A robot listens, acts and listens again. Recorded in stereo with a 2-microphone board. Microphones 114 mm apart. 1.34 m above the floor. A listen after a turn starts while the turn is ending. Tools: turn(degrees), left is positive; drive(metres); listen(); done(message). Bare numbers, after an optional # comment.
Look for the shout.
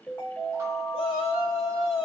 # The shout: about 55° left or 125° left.
turn(55)
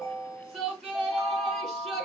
done("Facing the shout.")